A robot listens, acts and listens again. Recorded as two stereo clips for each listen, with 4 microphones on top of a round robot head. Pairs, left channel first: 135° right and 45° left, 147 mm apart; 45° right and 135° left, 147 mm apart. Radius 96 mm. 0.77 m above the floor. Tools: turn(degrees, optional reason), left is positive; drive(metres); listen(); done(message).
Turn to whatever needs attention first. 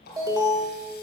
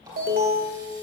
turn(degrees=110, reason="The alarm: 110° left.")
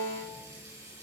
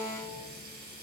listen()
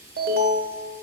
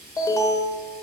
turn(degrees=25, reason="The alarm is now 25° left.")
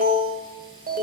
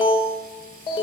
turn(degrees=15, reason="The alarm is now 15° left.")
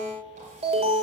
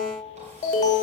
done("Found it: an alarm, straight ahead.")